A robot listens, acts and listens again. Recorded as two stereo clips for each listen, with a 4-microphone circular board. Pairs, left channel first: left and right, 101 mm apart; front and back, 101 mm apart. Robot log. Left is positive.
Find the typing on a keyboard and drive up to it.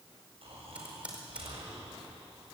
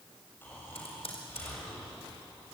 note: The typing on a keyboard: 10° right.
cmd yaw -10
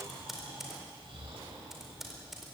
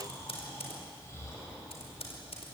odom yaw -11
cmd fwd 1.0
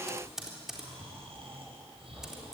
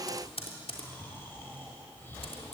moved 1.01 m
cmd fwd 1.0
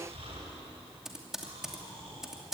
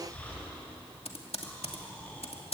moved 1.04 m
cmd fwd 1.0
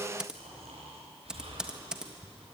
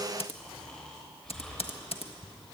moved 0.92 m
note: The typing on a keyboard is now 10° right.
cmd yaw -10
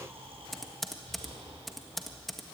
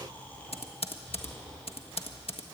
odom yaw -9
cmd fwd 1.0
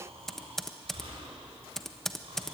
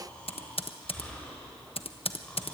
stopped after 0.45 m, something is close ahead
end: I am next to the typing on a keyboard.